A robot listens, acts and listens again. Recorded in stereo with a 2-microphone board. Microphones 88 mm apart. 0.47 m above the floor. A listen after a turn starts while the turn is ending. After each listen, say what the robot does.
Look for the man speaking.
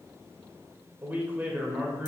Turn 20° right.
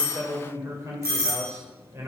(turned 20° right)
Turn 140° right.
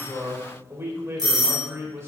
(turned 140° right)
Turn 35° right.
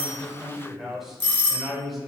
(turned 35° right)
Found it: a man speaking, straight ahead, 1 to 2 m away.